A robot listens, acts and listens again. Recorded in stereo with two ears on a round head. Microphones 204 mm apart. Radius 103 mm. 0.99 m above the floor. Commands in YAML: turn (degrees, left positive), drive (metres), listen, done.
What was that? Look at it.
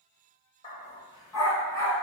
turn: 30
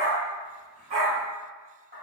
turn: -35
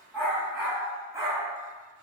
turn: -15
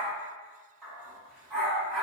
done: "Found it: a dog barking, straight ahead."